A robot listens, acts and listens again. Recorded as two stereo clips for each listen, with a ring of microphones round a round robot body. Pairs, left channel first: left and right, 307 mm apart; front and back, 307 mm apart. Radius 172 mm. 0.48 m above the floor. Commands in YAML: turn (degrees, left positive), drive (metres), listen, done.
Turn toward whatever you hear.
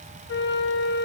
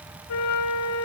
turn: 35
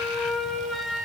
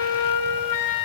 done: "Facing the flute, 1 to 2 m away."